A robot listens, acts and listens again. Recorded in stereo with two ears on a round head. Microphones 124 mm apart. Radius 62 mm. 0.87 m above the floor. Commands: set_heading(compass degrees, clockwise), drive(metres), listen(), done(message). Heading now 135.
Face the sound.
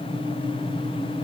listen()
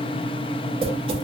set_heading(175)
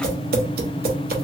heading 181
set_heading(276)
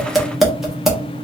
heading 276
done("Found it: tapping, straight ahead.")